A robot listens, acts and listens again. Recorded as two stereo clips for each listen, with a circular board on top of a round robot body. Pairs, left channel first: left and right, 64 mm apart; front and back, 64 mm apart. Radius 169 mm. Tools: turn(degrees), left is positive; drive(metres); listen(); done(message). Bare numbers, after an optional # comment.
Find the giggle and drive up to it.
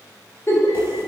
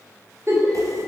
# The giggle: 135° left.
turn(135)
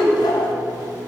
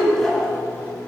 drive(1.0)
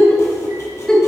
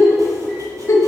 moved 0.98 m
# The giggle is now 10° left.
turn(10)
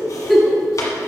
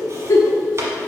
drive(1.0)
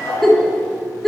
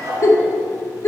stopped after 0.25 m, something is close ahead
done("I am next to the giggle.")